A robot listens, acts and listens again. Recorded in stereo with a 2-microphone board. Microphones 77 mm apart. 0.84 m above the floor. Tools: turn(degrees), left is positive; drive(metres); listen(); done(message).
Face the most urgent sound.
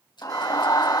turn(degrees=45)
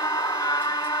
turn(degrees=75)
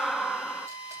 done("Found it: a scream, straight ahead.")